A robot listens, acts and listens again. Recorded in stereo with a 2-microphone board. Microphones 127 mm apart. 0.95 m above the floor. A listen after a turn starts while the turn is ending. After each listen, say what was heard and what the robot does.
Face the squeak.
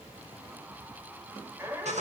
The squeak: about 20° right or 160° right. Turn 20° right.
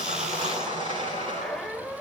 Facing the squeak, 1 to 2 m away.